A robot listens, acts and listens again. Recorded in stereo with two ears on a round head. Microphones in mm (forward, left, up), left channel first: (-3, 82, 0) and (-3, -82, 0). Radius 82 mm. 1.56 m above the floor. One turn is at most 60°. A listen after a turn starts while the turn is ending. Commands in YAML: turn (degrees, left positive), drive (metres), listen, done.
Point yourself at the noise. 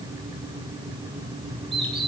turn: -30
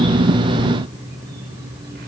listen: true
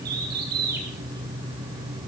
turn: -60
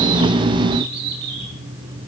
turn: -60
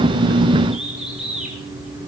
done: "Found it: a bird, straight ahead."